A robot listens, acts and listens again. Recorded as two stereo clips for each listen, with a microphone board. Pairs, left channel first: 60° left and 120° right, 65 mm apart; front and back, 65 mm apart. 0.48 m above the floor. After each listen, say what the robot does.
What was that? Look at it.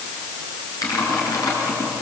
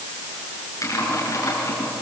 Turn 35° left.
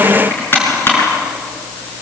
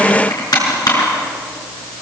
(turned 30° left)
Found it: typing on a keyboard, straight ahead, over 4 m away.